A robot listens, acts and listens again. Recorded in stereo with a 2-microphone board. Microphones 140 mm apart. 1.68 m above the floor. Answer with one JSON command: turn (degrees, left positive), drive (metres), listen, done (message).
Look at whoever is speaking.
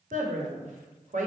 {"turn": -65}
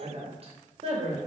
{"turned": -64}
{"turn": -45}
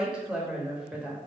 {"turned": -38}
{"done": "Found it: a woman speaking, straight ahead, 1 to 2 m away."}